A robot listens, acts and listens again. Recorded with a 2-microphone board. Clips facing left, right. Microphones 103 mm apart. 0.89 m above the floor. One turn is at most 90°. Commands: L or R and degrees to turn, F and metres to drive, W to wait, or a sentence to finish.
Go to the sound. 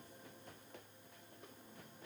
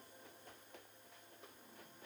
W
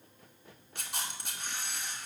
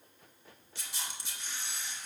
L55
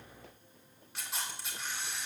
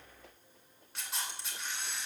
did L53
F1.0
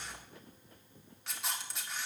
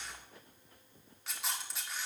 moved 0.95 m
F1.0
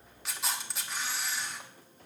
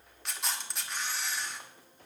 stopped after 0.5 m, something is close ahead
Arrived at the camera shutter, straight ahead.